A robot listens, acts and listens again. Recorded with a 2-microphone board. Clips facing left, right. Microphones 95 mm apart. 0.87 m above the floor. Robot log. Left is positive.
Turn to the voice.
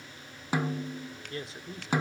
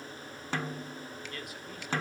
note: The man speaking: about 30° left or 150° left.
cmd yaw +30
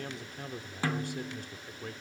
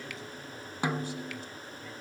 note: So it is at 120° left.
cmd yaw +120
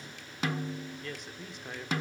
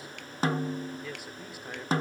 end: Found it: a man speaking, straight ahead, 2 to 4 m away.